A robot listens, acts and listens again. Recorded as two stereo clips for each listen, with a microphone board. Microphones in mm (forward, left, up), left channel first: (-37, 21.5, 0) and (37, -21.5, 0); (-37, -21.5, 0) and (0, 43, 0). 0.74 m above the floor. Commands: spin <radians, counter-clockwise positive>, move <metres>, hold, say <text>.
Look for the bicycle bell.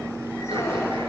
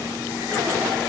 hold
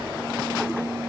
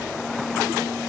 hold
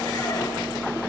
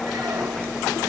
say I can't make out a bicycle bell.